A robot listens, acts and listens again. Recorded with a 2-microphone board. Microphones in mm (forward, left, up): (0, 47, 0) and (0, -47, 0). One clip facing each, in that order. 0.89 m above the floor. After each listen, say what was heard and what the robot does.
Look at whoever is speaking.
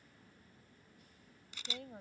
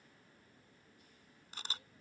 Turn 90° left.
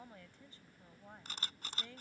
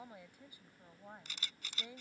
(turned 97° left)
So it is at 15° right. Turn 15° right.
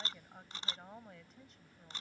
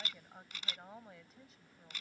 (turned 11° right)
Found it: a woman speaking, straight ahead.